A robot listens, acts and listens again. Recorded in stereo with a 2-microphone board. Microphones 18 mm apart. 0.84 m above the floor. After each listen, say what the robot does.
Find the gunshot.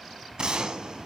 Turn 50° right.
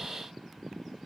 Keep listening.
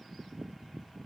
I heard a gunshot, but can't make it out now. It was about straight ahead or 80° right.